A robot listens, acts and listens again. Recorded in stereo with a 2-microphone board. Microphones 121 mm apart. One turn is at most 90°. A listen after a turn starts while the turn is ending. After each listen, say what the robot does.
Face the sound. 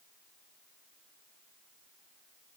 Keep listening.
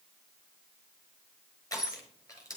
Turn 30° left.
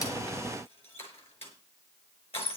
Turn 90° left.
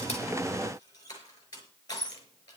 Turn 35° left.
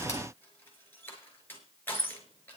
Turn 20° left.
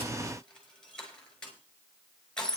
Found it: crushing, straight ahead.